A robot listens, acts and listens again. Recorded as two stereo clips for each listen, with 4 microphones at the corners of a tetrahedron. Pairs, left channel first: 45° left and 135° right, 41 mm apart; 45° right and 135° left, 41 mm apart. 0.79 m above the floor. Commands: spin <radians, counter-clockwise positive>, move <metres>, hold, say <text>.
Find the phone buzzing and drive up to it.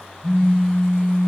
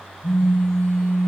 spin -0.26
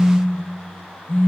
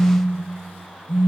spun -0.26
move 1.0
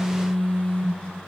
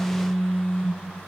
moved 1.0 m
move 1.0
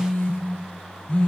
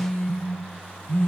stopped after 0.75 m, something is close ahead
spin -0.26
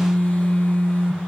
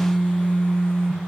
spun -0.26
say Arrived at the phone buzzing, straight ahead.